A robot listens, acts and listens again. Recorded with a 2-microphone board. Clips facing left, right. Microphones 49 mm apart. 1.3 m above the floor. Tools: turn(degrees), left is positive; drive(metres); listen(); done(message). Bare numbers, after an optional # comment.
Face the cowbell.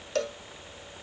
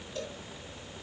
# The cowbell: about 70° left or 110° left.
turn(70)
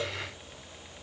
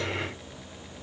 listen()
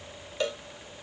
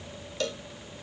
# So it is at 20° left.
turn(20)
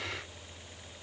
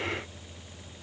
done("Found it: a cowbell, straight ahead, under 1 m away.")